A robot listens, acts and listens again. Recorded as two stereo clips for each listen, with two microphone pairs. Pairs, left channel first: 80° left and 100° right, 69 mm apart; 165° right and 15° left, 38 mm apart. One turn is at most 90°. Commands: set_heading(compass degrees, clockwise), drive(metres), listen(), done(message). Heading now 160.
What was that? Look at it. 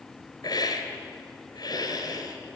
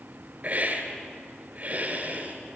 set_heading(95)
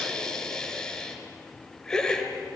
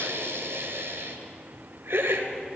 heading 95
done("Facing the hiss, 2 to 4 m away.")